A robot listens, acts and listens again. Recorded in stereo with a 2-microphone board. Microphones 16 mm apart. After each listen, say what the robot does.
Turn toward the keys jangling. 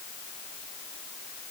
Keep listening.
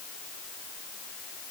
Keep listening.
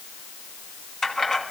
Turn 35° left.
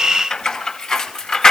Turn 130° left.
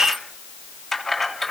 Turn 15° left.
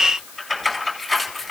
Found it: keys jangling, straight ahead.